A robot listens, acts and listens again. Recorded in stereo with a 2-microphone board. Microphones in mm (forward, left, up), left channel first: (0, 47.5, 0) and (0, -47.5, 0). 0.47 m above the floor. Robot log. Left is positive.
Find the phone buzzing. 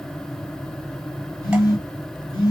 note: The phone buzzing: about 45° left or 135° left.
cmd yaw +45
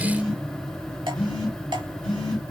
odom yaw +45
end: Found it: a phone buzzing, straight ahead.